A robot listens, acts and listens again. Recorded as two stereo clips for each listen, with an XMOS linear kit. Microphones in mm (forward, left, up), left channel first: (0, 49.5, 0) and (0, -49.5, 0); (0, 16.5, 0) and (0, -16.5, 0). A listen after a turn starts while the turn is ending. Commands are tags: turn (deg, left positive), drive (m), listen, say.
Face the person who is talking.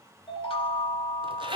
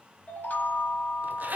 <listen/>
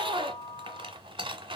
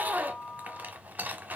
<listen/>
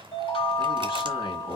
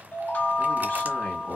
<turn deg="55"/>
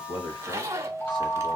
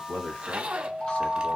<listen/>
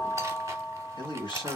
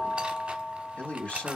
<turn deg="60"/>
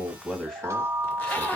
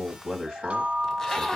<say>Facing the man speaking.</say>